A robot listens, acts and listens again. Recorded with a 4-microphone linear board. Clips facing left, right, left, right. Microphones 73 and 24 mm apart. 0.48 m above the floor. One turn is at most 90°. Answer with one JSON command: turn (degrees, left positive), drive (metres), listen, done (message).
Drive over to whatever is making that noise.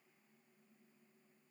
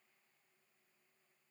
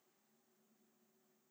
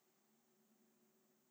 {"listen": true}
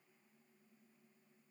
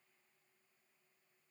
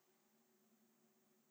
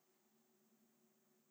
{"listen": true}
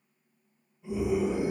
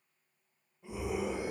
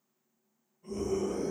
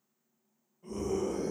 {"turn": -45}
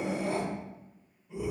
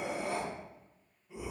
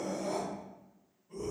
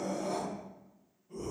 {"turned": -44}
{"drive": 1.0}
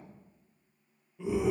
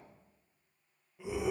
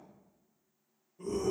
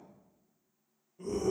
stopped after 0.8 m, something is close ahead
{"turn": -15}
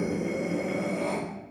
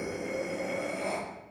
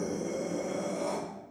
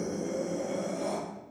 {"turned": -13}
{"done": "I am next to the scream."}